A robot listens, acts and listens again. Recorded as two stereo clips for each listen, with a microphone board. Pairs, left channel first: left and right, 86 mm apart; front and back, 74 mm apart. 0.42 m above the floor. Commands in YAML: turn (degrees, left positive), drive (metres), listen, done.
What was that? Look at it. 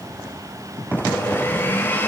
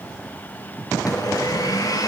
turn: 25
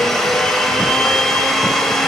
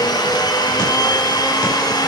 done: "Facing the blender."